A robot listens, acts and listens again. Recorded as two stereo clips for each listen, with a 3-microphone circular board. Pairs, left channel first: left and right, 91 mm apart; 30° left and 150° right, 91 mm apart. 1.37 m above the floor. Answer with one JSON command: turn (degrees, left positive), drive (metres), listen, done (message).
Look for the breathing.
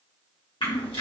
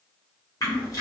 {"listen": true}
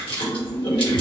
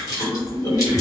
{"listen": true}
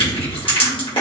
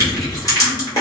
{"done": "I can't make out breathing to turn to."}